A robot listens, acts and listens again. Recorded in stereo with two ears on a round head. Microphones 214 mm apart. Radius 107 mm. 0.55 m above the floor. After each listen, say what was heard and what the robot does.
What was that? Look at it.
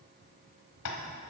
The tapping: about 75° left or 105° left. Turn 75° left.
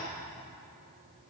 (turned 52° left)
So it is at 20° left. Turn 20° left.
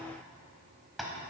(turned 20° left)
Facing the tapping.